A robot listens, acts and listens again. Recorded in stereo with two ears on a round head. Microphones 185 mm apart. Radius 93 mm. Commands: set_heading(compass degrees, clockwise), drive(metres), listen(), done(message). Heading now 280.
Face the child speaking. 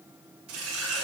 listen()
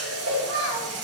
set_heading(350)
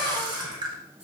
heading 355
listen()
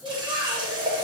done("Found it: a child speaking, straight ahead, over 4 m away.")